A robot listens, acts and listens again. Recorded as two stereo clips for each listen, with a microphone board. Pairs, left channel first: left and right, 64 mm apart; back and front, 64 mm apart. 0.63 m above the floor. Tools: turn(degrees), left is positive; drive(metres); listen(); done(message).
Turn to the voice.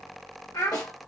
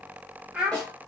turn(degrees=70)
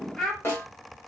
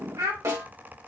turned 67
done("Facing the child speaking, 1 to 2 m away.")